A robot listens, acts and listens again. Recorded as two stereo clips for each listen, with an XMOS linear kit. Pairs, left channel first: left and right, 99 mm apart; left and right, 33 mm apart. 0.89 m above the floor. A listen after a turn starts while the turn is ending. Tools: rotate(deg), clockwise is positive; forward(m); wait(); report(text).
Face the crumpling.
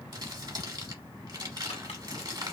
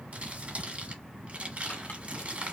rotate(45)
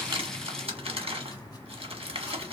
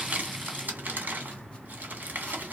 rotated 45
rotate(85)
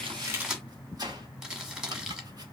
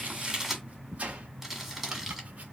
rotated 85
report("Found it: crumpling, straight ahead.")